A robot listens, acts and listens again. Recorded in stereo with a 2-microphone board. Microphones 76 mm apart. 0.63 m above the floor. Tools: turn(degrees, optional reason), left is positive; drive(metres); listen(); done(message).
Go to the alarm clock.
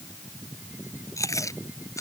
listen()
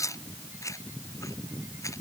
listen()
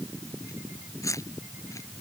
done("I can't make out an alarm clock, only chewing.")